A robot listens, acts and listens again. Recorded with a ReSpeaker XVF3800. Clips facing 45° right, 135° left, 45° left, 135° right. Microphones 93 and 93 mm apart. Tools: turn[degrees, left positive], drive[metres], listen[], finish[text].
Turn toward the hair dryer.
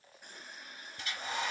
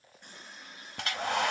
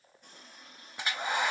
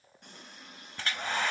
Thought: The hair dryer: 120° left.
Action: turn[120]
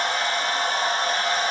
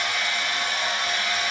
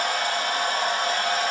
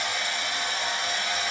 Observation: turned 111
Thought: The hair dryer is now 10° left.
Action: turn[10]
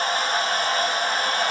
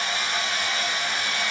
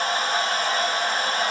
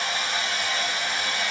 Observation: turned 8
Action: finish[Found it: a hair dryer, straight ahead.]